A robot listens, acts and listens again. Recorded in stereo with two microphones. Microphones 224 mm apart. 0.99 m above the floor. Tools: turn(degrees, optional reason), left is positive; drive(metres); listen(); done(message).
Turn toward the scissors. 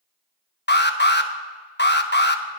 listen()
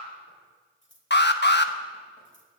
turn(degrees=55, reason="The scissors: about 55° left or 125° left.")
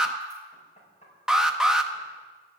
listen()
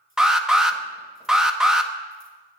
listen()
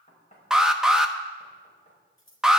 turn(degrees=70, reason="So it is at 70° left.")
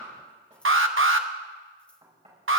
listen()
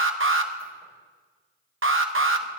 listen()
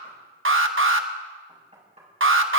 done("Facing where the scissors came from. I can't hear it now.")